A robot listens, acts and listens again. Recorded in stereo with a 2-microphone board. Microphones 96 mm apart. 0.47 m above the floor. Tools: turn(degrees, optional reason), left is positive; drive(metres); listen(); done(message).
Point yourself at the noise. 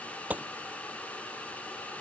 turn(degrees=-15, reason="The gunshot: about 15° right or 165° right.")
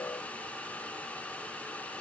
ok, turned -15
listen()
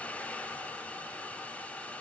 done("I heard a gunshot, but can't make it out now. It was about straight ahead or 150° right.")